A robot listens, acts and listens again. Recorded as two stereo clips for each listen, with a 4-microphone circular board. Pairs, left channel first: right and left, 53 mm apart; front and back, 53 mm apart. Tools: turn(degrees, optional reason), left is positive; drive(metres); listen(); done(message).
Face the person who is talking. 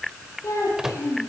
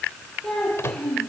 turn(degrees=-85, reason="The child speaking: 85° right.")
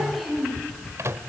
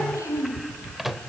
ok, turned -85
done("Found it: a child speaking, straight ahead, over 4 m away.")